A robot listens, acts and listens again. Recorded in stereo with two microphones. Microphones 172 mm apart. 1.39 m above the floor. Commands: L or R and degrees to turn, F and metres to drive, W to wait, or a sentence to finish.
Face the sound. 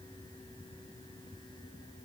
W
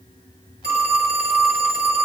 R90
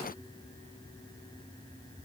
W
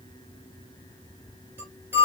R15
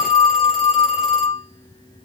Facing the phone ringing, 2 to 4 m away.